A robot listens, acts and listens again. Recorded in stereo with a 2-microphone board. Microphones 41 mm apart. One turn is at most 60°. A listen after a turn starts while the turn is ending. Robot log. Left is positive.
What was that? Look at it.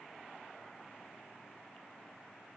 cmd idle
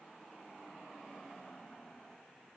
cmd idle
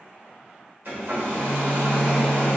note: The hair dryer: about 55° right or 125° right.
cmd yaw -55
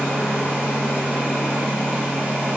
note: So it is at 60° right.
cmd yaw -60
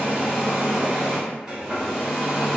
note: The hair dryer is now 15° right.
cmd yaw -15
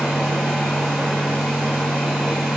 end: Facing the hair dryer, 1 to 2 m away.